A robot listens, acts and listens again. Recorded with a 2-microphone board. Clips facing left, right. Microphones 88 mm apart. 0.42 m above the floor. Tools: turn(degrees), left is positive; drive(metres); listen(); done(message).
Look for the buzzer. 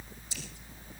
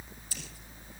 listen()
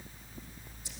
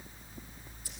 listen()
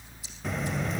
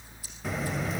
turn(degrees=30)
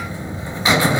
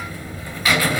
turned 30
turn(degrees=155)
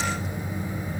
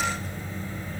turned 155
turn(degrees=15)
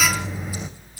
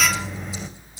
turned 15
done("Found it: a buzzer, straight ahead.")